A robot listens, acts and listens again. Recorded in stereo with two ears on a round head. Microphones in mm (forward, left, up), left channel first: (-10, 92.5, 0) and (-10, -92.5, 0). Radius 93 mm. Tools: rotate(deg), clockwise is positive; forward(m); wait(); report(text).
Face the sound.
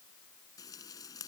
rotate(-20)
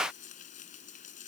rotate(-140)
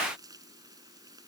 rotate(20)
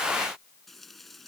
report("Facing the frying.")